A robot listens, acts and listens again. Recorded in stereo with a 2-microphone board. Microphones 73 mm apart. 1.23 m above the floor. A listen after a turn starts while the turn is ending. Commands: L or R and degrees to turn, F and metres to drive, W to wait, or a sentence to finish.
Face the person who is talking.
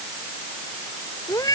W
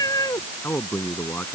L30
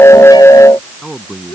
Facing the man speaking.